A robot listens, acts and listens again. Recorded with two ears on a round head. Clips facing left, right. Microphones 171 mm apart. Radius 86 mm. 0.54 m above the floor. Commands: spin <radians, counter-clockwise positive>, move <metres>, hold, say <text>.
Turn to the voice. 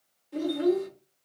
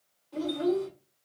spin 0.52
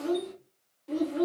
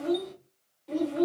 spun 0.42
spin 0.17
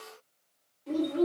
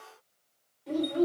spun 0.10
say Found it: a child speaking, straight ahead, 1 to 2 m away.